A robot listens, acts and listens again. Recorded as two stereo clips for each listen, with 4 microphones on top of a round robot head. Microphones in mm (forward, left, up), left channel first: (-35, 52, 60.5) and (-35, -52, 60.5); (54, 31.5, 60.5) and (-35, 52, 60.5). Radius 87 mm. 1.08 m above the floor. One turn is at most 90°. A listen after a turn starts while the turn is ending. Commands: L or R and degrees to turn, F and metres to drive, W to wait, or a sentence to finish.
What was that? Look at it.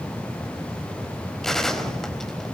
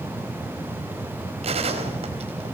L90
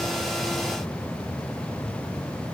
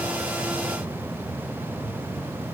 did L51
L90
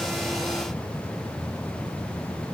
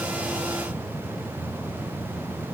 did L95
L30
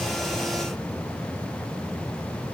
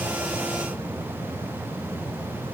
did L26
Facing where the gunshot came from. I can't hear it now.